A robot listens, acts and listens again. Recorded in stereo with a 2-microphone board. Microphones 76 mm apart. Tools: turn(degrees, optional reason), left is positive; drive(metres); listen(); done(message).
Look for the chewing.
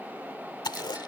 turn(degrees=90)
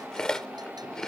turn(degrees=10, reason="So it is at 10° left.")
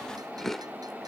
done("Facing the chewing.")